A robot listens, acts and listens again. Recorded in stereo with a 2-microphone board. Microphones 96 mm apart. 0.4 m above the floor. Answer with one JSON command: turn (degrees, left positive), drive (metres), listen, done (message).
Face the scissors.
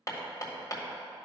{"listen": true}
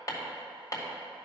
{"listen": true}
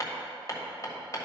{"done": "I can't make out scissors to turn to."}